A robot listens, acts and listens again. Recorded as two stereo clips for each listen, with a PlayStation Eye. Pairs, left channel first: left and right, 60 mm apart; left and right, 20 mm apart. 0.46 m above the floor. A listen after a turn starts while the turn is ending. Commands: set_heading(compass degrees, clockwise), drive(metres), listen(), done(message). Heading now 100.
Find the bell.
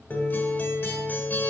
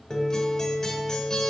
listen()
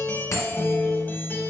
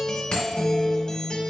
set_heading(45)
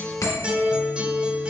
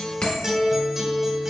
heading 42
set_heading(337)
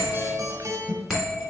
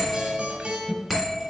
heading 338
done("Found it: a bell, straight ahead, 2 to 4 m away.")